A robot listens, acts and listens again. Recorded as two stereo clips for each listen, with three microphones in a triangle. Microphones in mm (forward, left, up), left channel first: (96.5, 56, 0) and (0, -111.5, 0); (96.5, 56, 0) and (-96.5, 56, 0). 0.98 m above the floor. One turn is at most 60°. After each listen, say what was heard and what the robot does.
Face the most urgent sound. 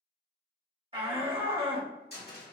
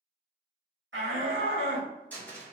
The shout: straight behind. Turn 60° left.
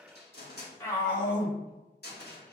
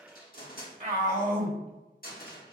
The shout is now 135° left. Turn 60° left.
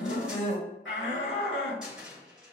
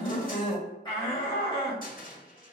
The shout is now 65° left. Turn 60° left.
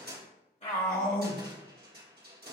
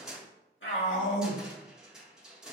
Found it: a shout, straight ahead, 1 to 2 m away.